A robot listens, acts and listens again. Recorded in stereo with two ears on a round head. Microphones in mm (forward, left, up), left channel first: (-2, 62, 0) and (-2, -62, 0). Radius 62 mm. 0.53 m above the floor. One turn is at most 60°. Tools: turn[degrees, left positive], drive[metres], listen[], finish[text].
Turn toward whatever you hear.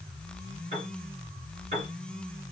Thought: The piano: about 50° right or 130° right.
Action: turn[-50]
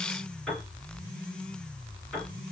Action: finish[Found it: a piano, straight ahead, 2 to 4 m away.]